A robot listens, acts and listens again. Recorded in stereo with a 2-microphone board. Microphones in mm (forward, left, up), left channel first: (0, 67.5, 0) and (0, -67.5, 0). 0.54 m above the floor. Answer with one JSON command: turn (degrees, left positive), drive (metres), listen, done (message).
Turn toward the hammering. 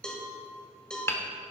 {"turn": 20}
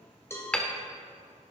{"turn": 10}
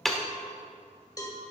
{"done": "Facing the hammering, 1 to 2 m away."}